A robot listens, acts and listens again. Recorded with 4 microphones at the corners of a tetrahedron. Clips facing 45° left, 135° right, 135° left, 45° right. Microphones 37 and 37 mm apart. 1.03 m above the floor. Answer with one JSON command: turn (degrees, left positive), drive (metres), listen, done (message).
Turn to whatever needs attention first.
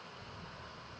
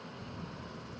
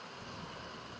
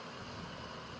{"listen": true}
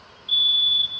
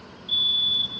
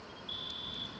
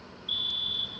{"turn": -20}
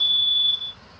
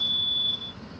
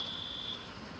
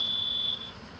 {"done": "Found it: a fire alarm, straight ahead."}